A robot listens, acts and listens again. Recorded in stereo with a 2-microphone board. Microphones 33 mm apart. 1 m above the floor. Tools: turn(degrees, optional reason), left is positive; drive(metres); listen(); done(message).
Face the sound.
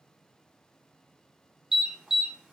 turn(degrees=-30)
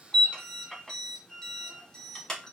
turn(degrees=20, reason="So it is at 20° left.")
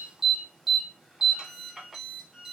done("Facing the alarm.")